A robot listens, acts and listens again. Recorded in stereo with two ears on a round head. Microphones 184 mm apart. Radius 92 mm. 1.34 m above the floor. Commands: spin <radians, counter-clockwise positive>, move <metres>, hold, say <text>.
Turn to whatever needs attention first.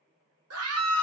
spin -1.57
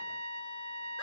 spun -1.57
hold
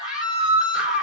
say Facing the scream.